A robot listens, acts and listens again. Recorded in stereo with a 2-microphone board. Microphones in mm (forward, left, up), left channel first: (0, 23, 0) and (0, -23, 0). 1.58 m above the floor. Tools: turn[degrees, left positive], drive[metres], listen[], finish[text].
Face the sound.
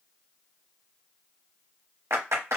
Thought: The clap: about 70° right or 110° right.
Action: turn[-70]
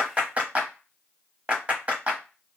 Thought: So it is at 30° right.
Action: turn[-30]
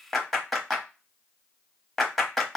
Action: finish[Facing the clap.]